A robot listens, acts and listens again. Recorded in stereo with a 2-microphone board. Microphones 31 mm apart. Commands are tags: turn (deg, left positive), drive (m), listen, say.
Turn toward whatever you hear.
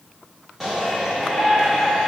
<turn deg="-30"/>
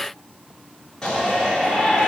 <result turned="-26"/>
<turn deg="20"/>
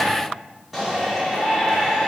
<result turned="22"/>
<say>Facing the shout, over 4 m away.</say>